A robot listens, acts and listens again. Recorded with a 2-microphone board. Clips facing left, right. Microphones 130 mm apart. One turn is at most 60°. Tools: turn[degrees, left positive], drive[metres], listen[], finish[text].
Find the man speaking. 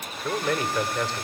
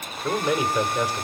Action: turn[-30]
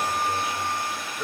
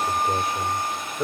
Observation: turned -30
Thought: So it is at 135° right.
Action: turn[-60]
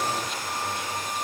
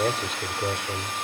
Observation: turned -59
Thought: The man speaking is now 75° right.
Action: turn[-60]
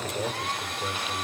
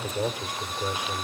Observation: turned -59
Thought: The man speaking is now 15° right.
Action: turn[-15]
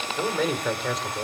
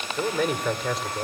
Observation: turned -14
Action: finish[Found it: a man speaking, straight ahead.]